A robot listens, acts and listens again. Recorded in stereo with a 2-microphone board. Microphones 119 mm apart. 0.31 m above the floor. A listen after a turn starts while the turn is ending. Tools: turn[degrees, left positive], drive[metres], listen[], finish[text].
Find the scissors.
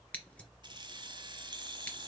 Action: turn[30]
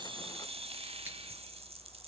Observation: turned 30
Action: listen[]
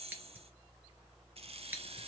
Thought: So it is at 15° right.
Action: turn[-15]
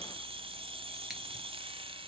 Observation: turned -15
Action: listen[]
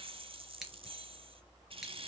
Action: listen[]
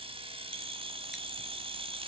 Action: finish[Facing where the scissors came from. I can't hear it now.]